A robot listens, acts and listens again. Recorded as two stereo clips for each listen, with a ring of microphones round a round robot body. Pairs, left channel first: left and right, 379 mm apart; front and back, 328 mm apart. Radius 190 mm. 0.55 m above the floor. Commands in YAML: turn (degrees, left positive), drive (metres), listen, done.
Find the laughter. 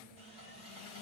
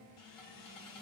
listen: true
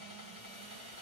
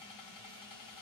listen: true
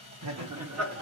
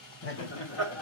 turn: -40
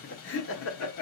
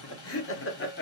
turn: 50
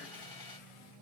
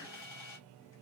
listen: true
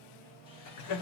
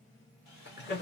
turn: 55
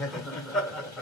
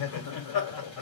done: "Found it: laughter, straight ahead, 1 to 2 m away."